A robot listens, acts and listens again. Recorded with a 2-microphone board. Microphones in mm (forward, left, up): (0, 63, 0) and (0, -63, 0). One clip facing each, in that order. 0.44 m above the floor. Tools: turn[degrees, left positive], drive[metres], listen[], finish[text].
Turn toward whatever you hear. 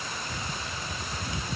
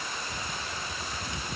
Action: listen[]
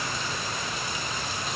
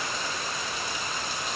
Action: listen[]
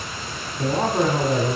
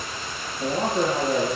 Thought: The man speaking: about 55° left or 125° left.
Action: turn[55]
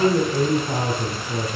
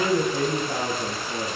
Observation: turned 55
Thought: So it is at 65° left.
Action: turn[65]
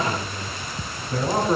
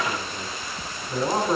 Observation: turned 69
Action: finish[Found it: a man speaking, straight ahead.]